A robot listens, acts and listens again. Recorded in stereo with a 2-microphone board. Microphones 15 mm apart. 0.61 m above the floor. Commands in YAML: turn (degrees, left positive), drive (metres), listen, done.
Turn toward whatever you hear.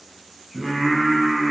turn: 30
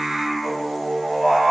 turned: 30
turn: -45
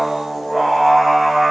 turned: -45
turn: -10
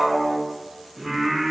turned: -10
turn: -10
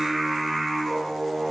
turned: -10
done: "Found it: singing, straight ahead, 2 to 4 m away."